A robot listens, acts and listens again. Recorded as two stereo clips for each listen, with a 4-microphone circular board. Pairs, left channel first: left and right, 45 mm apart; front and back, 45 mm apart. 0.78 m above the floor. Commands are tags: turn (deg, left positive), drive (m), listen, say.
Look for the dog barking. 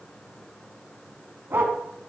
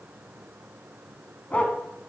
<turn deg="-60"/>
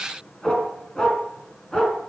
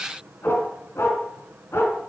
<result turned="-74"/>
<turn deg="15"/>
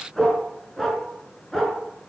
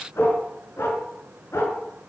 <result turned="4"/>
<turn deg="10"/>
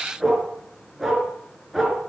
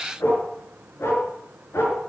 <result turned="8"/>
<say>Facing the dog barking, over 4 m away.</say>